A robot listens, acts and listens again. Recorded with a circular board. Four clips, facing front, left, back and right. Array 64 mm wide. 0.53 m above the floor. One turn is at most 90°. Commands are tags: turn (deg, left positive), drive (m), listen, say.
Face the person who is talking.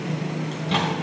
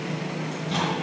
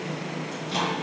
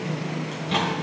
<listen/>
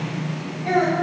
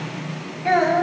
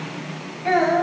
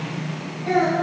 <turn deg="90"/>
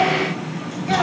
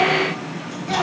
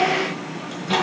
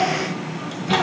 <turn deg="10"/>
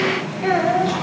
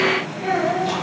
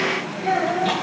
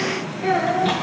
<turn deg="-10"/>
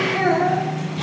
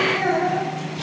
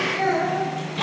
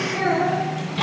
<say>Facing the child speaking, 2 to 4 m away.</say>